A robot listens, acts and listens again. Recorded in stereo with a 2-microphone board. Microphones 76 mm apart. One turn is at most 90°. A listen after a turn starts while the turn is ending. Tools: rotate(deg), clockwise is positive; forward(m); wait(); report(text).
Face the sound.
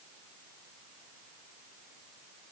wait()
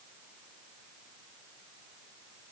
wait()
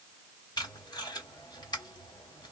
rotate(-65)
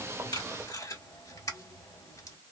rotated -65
rotate(-50)
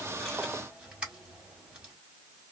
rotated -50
rotate(15)
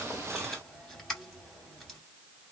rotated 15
report("Found it: tape being pulled, straight ahead, 1 to 2 m away.")